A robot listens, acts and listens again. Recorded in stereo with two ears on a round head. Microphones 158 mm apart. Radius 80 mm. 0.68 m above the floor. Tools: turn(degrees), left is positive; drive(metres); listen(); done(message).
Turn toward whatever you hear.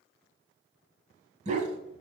turn(degrees=-45)
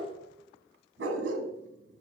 turn(degrees=-85)
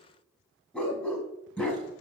turn(degrees=10)
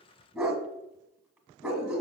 done("Facing the dog barking, 1 to 2 m away.")